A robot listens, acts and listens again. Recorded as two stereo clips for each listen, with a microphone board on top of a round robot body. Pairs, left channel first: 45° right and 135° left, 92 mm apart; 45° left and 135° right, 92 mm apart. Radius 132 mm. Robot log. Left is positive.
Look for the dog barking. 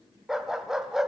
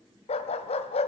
note: The dog barking: 50° left.
cmd yaw +50
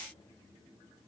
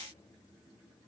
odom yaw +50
cmd idle
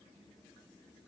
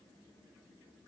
cmd idle
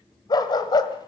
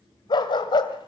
end: Found it: a dog barking, straight ahead.